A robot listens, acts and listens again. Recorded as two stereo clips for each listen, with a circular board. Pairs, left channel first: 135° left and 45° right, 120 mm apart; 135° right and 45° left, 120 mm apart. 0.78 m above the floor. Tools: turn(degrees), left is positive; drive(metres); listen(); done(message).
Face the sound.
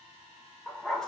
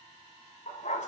turn(degrees=-140)
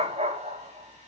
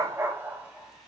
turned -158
turn(degrees=-35)
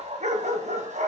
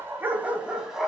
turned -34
turn(degrees=-40)
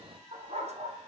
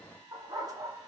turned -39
turn(degrees=-15)
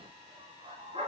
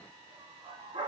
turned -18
done("Found it: a dog barking, straight ahead, 2 to 4 m away.")